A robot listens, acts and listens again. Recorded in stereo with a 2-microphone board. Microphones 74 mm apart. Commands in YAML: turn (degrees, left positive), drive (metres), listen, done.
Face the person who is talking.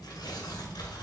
listen: true
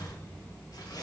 listen: true
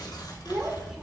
turn: -30
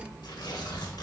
listen: true
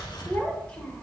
turn: 15
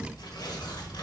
listen: true
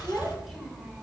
done: "Found it: a child speaking, straight ahead, 1 to 2 m away."